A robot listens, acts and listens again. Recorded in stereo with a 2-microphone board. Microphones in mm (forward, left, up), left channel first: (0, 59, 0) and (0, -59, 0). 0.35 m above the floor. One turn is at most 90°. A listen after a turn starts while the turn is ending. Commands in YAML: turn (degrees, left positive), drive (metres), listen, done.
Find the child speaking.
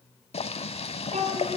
turn: -90
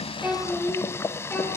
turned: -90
turn: 15
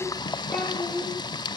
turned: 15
done: "Facing the child speaking."